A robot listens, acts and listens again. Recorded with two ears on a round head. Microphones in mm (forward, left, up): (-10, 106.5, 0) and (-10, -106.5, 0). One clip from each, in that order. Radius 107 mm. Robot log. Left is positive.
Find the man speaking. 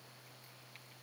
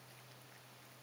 cmd idle
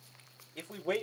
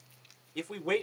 note: The man speaking: about 45° right or 135° right.
cmd yaw -45
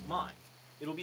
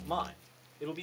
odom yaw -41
end: Found it: a man speaking, straight ahead, 1 to 2 m away.